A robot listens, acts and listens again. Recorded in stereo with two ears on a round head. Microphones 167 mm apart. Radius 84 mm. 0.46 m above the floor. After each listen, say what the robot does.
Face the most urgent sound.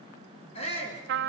Turn 30° left.
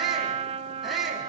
Facing the shout, over 4 m away.